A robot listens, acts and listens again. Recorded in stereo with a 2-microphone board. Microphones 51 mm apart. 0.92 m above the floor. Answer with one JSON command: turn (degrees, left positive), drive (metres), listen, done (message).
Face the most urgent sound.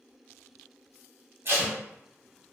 {"listen": true}
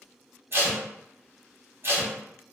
{"listen": true}
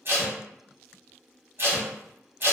{"done": "I can't make out anything urgent, only tape being pulled."}